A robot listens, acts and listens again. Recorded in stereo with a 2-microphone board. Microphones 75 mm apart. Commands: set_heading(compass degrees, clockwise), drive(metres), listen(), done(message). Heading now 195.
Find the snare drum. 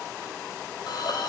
listen()
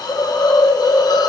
listen()
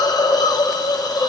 done("I can't make out a snare drum to turn to.")